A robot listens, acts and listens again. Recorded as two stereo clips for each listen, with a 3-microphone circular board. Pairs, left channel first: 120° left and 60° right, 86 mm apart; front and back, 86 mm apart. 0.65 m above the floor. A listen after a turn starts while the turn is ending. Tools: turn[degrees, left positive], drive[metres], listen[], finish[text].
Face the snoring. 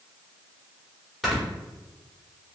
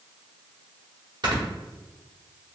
Thought: The snoring: 150° right.
Action: turn[-150]
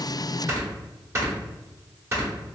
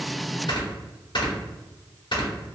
Action: finish[Facing the snoring, 1 to 2 m away.]